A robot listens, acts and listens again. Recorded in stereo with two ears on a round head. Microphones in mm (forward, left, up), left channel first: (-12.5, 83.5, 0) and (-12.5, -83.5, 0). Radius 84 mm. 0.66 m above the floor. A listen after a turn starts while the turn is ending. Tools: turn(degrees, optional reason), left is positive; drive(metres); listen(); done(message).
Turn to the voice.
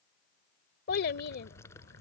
turn(degrees=60, reason="The child speaking: about 60° left or 120° left.")
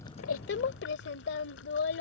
turn(degrees=60, reason="So it is at 60° left.")
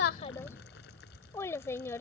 turn(degrees=15, reason="The child speaking is now 15° left.")
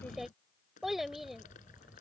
done("Facing the child speaking.")